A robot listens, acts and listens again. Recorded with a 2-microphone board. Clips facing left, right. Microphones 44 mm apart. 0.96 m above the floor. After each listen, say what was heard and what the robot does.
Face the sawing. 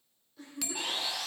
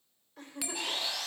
Turn 30° left.
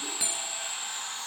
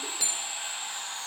So it is at 25° right. Turn 25° right.
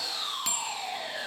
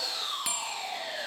Facing the sawing.